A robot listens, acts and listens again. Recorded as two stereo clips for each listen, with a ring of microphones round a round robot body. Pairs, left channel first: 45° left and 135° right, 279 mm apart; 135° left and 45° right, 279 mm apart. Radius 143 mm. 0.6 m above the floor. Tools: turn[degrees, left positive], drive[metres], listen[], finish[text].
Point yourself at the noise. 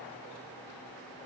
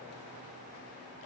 Action: listen[]
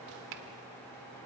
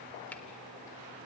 Action: listen[]
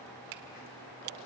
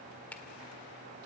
Thought: The finger snap: 140° right.
Action: turn[-140]
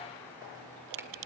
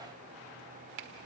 Thought: The finger snap is now 55° right.
Action: turn[-55]
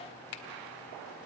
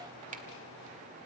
Thought: The finger snap is now 15° left.
Action: turn[15]
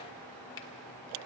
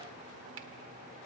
Action: listen[]
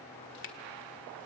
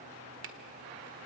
Action: finish[Facing the finger snap.]